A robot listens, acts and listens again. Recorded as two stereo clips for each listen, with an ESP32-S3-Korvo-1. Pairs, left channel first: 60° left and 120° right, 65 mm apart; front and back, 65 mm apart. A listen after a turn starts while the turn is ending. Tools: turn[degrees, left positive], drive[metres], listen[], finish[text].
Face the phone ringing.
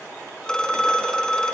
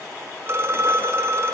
Thought: The phone ringing: 140° left.
Action: turn[140]
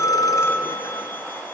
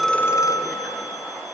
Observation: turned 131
Action: finish[Facing the phone ringing.]